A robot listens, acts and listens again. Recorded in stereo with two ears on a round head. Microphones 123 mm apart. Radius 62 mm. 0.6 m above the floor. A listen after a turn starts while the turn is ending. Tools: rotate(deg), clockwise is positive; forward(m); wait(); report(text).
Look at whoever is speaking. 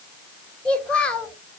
rotate(-30)
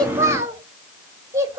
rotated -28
rotate(20)
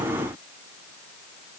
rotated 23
wait()
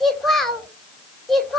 report("Facing the child speaking.")